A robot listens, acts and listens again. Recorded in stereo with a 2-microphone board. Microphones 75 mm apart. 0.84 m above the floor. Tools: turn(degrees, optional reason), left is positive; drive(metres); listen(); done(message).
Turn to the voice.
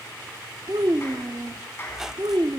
turn(degrees=-90)
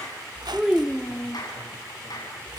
turn(degrees=-10, reason="So it is at 10° right.")
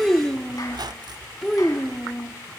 done("Found it: a child speaking, straight ahead, 1 to 2 m away.")